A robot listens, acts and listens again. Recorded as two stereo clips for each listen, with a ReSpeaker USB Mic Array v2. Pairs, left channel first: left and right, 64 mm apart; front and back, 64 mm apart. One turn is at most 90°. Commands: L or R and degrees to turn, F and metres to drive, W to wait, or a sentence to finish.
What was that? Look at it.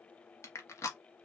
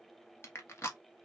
L50
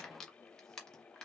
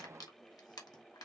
L10
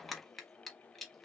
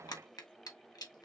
Found it: crushing, straight ahead, 1 to 2 m away.